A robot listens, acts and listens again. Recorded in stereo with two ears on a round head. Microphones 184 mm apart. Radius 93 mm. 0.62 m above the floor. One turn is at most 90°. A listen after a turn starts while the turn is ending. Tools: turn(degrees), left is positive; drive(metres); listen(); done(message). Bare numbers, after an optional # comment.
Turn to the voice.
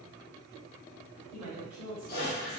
# The woman speaking: about 40° right or 140° right.
turn(-40)
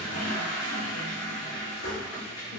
listen()
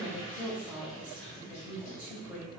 done("Found it: a woman speaking, straight ahead.")